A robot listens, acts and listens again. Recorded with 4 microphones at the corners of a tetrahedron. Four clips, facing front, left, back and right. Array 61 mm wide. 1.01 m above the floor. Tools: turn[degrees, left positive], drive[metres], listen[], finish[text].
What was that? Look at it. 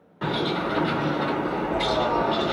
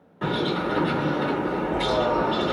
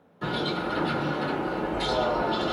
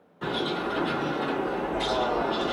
Thought: The bird: 35° left.
Action: turn[35]
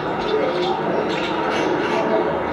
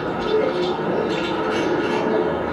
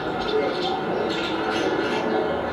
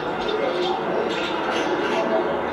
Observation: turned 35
Action: finish[Found it: a bird, straight ahead.]